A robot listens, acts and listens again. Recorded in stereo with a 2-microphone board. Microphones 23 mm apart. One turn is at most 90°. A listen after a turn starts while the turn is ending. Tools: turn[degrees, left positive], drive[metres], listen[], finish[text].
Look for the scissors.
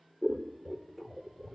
Action: turn[-30]
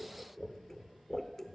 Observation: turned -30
Thought: So it is at 20° left.
Action: turn[20]
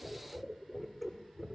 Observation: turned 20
Action: finish[Found it: scissors, straight ahead.]